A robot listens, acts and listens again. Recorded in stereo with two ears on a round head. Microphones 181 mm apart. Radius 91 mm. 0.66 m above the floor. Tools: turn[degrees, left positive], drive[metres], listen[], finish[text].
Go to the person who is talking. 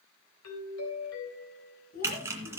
Thought: The child speaking: about 45° left or 135° left.
Action: turn[45]
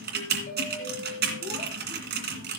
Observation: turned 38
Action: listen[]
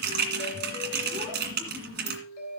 Action: listen[]
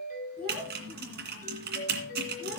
Action: drive[1.0]
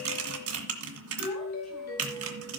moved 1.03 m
Action: listen[]
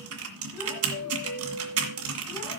Action: listen[]
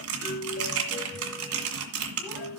Action: finish[Facing where the child speaking came from. I can't hear it now. I did not reach it.]